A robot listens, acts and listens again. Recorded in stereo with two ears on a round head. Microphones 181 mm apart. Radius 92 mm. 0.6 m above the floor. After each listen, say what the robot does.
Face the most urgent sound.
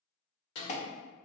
Turn 35° left.
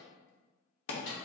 Turn 105° left.
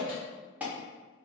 Turn 10° right.
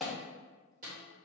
Found it: an alarm, straight ahead, under 1 m away.